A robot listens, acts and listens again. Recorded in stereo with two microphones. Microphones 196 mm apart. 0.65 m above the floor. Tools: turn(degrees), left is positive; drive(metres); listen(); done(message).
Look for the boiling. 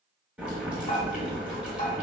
turn(degrees=-30)
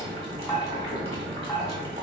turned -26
turn(degrees=-150)
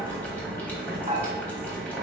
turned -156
turn(degrees=10)
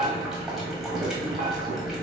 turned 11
done("Found it: boiling, straight ahead.")